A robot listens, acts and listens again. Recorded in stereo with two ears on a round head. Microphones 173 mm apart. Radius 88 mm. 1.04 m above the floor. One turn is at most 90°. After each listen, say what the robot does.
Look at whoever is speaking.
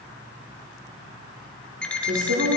Turn 65° right.
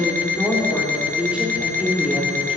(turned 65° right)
Found it: a woman speaking, straight ahead.